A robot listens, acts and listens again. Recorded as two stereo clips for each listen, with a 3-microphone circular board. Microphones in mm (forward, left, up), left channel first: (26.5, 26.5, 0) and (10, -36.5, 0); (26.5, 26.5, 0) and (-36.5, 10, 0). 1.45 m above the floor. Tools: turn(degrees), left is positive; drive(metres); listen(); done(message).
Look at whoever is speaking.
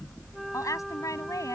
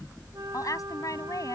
turn(degrees=45)
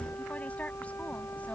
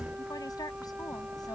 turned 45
listen()
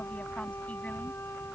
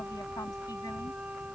listen()
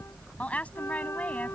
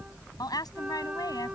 done("Facing the woman speaking.")